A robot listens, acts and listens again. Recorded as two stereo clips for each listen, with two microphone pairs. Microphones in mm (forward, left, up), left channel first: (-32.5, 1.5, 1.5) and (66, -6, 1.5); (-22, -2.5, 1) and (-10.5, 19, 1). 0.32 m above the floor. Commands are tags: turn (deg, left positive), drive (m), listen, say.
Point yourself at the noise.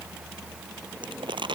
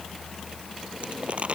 <turn deg="30"/>
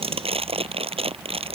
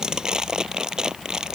<say>Found it: crumpling, straight ahead.</say>